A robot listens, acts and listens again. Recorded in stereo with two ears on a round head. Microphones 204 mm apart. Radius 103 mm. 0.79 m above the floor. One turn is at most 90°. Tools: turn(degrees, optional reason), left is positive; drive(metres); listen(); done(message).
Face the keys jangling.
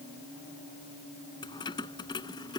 turn(degrees=20, reason="The keys jangling: about 20° left or 160° left.")
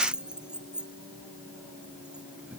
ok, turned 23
done("Facing the keys jangling.")